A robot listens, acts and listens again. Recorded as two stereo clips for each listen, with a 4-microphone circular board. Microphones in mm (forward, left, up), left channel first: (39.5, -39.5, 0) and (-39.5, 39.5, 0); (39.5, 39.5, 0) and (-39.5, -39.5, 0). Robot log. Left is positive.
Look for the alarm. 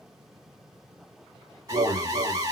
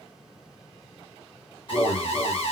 note: The alarm: 80° left.
cmd yaw +80
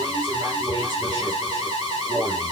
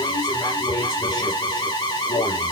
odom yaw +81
end: Facing the alarm.